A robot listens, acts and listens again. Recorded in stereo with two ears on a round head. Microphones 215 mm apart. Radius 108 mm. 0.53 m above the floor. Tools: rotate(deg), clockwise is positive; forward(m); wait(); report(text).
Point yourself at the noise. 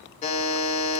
rotate(-30)
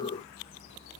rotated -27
wait()
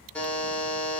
report("Facing the buzzer, under 1 m away.")